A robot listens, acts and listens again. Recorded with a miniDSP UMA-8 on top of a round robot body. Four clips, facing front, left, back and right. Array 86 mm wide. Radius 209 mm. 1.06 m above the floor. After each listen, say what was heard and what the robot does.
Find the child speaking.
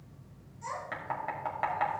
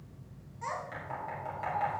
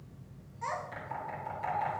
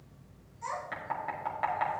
The child speaking: 150° left. Turn 150° left.
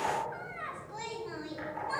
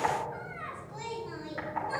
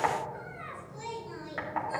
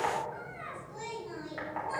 The child speaking is now 10° left. Turn 10° left.
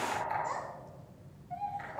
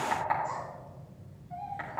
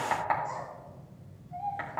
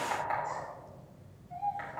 Facing the child speaking, over 4 m away.